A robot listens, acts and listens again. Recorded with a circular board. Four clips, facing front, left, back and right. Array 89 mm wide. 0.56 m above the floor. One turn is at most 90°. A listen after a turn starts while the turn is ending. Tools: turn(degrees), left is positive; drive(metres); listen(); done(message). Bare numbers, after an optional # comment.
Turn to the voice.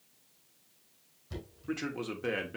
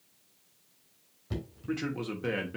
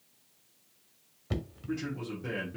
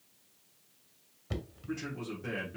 # The man speaking: 40° left.
turn(40)
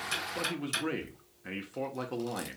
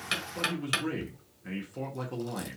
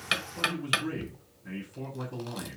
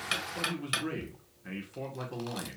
done("Facing the man speaking.")